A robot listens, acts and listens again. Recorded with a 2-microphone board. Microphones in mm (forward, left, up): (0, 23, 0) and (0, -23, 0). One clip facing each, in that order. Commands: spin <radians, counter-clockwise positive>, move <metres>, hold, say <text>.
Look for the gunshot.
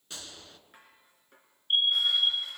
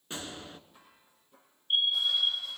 spin -0.44
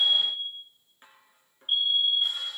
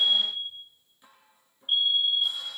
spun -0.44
hold
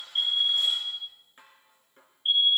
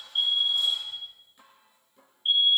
say I heard a gunshot, but can't make it out now. It was about straight ahead or 130° right.